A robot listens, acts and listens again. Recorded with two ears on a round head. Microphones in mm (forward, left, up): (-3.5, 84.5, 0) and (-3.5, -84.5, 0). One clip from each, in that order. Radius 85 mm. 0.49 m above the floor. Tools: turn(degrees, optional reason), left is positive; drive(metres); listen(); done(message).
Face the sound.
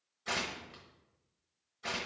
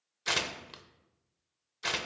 turn(degrees=-75, reason="The tearing paper: about 75° right or 105° right.")
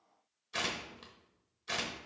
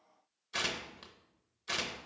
done("Found it: tearing paper, straight ahead, under 1 m away.")